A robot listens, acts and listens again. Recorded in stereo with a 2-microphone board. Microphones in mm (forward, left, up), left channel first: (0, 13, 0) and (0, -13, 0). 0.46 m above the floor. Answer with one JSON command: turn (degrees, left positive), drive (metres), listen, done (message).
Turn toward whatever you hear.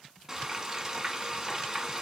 {"turn": -20}
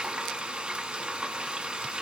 {"turn": -140}
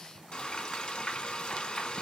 {"turn": 35}
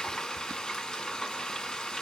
{"turn": 25}
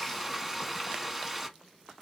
{"done": "Found it: frying, straight ahead, 1 to 2 m away."}